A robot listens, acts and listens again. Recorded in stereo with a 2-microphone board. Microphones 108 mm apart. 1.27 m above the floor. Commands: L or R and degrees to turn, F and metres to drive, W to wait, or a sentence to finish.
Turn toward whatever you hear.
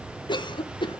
L45
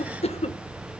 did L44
L85
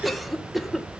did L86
Facing the cough.